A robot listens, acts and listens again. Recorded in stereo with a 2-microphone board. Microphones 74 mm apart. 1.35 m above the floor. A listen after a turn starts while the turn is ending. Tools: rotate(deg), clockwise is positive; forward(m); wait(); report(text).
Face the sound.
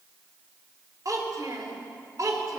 rotate(55)
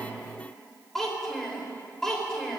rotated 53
report("Facing the child speaking, over 4 m away.")